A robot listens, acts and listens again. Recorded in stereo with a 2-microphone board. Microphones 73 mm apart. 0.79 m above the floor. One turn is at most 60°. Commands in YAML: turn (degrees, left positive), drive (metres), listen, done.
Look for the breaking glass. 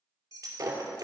turn: -50
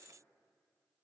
listen: true
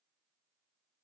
done: "I heard breaking glass, but can't make it out now. It was about straight ahead or 80° right."